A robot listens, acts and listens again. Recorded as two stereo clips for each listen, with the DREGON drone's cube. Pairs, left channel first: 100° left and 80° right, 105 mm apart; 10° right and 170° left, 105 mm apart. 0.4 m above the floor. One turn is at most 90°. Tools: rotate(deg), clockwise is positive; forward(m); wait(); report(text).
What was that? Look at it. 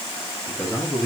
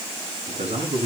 rotate(-90)
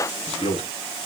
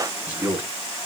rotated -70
rotate(-90)
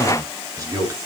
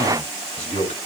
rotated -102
rotate(20)
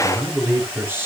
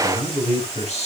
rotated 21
rotate(10)
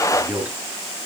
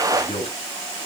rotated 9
report("Facing the man speaking.")